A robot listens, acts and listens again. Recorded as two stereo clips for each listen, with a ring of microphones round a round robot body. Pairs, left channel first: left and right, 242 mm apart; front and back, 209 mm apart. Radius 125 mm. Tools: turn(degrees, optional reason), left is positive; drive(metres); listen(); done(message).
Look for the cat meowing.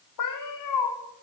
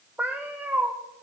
turn(degrees=100, reason="The cat meowing: 100° left.")
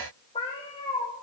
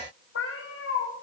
turn(degrees=20, reason="The cat meowing is now 20° left.")
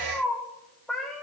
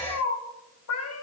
done("Facing the cat meowing.")